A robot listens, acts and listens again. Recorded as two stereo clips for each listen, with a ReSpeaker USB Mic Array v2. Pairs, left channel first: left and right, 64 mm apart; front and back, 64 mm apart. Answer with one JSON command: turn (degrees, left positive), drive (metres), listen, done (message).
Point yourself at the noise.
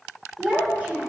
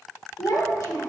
{"turn": -25}
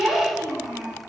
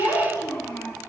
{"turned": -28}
{"turn": -15}
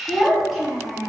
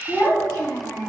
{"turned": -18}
{"done": "Facing the child speaking, 2 to 4 m away."}